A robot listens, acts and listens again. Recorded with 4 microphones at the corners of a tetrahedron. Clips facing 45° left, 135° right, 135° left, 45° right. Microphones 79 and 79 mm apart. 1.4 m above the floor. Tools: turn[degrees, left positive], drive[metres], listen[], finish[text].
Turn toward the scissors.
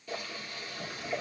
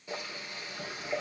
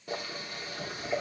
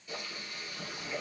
Action: listen[]
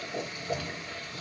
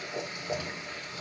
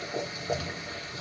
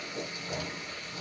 Action: listen[]
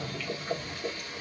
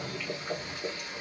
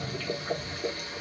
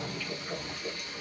Action: finish[I can't make out scissors to turn to.]